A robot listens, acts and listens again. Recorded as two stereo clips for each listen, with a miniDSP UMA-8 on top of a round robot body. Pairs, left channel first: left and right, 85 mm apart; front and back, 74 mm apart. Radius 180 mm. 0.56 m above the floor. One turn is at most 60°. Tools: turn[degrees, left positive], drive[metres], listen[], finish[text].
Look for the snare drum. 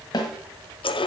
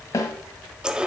Thought: The snare drum: 50° left.
Action: turn[50]
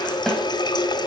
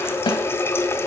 Action: finish[Found it: a snare drum, straight ahead.]